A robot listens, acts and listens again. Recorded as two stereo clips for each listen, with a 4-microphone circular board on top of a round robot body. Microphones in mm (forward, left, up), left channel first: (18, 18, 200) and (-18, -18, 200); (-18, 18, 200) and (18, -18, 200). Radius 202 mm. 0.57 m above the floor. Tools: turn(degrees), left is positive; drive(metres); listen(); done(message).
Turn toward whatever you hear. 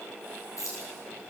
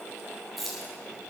turn(degrees=45)
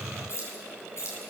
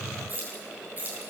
turn(degrees=10)
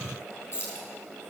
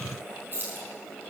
done("Facing the keys jangling.")